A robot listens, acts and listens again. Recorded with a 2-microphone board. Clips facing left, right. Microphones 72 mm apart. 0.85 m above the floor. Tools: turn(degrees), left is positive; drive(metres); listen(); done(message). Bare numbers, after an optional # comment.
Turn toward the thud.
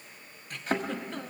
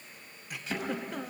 # The thud: about 45° left or 135° left.
turn(45)
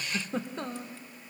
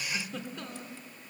listen()
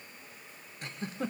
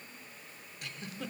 done("I heard a thud, but can't make it out now. It was about straight ahead or 90° left.")